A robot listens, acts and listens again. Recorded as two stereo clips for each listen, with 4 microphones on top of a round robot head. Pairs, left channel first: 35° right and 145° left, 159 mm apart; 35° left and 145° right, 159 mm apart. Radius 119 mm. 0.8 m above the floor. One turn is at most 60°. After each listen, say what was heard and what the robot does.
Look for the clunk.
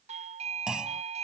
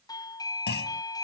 The clunk: 60° left. Turn 60° left.
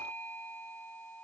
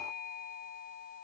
Facing where the clunk came from. I can't hear it now.